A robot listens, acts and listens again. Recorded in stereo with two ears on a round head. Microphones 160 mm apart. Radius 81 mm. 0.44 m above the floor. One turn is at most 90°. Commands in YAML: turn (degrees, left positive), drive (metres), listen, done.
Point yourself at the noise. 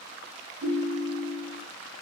turn: -30
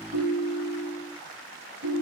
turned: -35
turn: -90
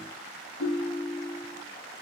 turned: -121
done: "Facing the ringtone."